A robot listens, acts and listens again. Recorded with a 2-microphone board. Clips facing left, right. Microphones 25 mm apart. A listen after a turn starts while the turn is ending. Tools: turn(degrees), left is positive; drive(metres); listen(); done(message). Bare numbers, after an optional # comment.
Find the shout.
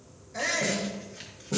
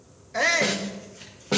# The shout: about 40° right or 140° right.
turn(-40)
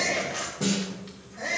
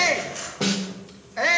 # So it is at 95° right.
turn(-95)
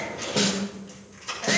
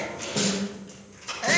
# The shout is now 15° right.
turn(-15)
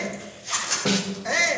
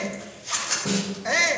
done("Found it: a shout, straight ahead.")